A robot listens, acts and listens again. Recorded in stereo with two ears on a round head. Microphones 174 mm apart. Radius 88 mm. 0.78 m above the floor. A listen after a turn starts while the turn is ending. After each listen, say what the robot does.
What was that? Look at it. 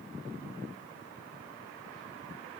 Keep listening.
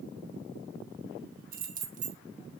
Turn 40° right.
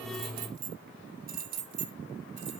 Turn 45° right.
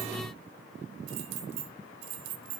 Turn 75° right.
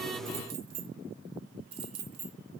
Turn 25° right.
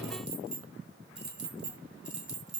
Facing the keys jangling.